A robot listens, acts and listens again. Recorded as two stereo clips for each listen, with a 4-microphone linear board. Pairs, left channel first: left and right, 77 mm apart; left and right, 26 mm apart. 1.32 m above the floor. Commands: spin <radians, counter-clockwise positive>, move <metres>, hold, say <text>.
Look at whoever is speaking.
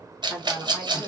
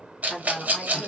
spin -0.61
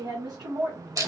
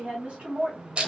spin -2.27
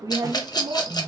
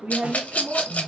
spin -1.13
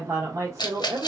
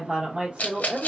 spin -0.79
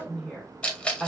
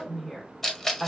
spin 0.17
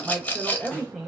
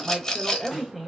say Found it: a woman speaking, straight ahead, 1 to 2 m away.